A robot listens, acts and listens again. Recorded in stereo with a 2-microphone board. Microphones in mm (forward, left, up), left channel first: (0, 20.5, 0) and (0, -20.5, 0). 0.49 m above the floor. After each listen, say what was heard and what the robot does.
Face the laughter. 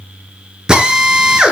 Keep listening.
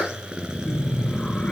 The laughter: about 25° left or 155° left. Turn 25° left.
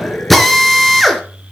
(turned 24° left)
So it is at 135° left. Turn 135° left.
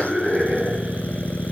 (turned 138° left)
Facing the laughter.